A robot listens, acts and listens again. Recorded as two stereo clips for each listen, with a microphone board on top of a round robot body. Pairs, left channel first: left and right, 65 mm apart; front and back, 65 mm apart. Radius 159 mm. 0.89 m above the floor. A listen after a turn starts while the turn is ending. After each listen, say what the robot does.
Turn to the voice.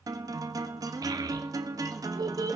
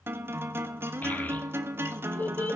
Turn 65° right.
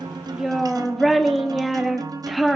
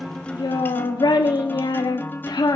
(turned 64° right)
Facing the child speaking.